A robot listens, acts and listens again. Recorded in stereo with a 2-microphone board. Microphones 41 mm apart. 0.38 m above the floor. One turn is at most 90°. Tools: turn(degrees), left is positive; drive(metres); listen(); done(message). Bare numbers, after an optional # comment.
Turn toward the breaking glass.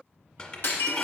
# The breaking glass: about 65° left or 115° left.
turn(65)
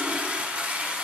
listen()
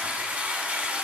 done("I heard breaking glass, but can't make it out now. It was about straight ahead or 50° left.")